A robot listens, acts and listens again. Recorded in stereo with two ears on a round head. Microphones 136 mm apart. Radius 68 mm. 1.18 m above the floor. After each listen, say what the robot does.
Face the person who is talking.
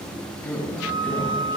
Turn 20° left.
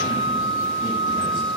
Keep listening.
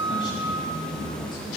Turn 140° left.
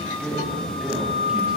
Found it: a man speaking, straight ahead, over 4 m away.